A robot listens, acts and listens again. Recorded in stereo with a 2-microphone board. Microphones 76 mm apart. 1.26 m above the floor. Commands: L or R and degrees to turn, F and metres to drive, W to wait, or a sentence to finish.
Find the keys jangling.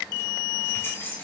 L30
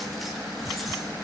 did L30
W
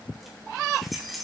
Facing the keys jangling, 2 to 4 m away.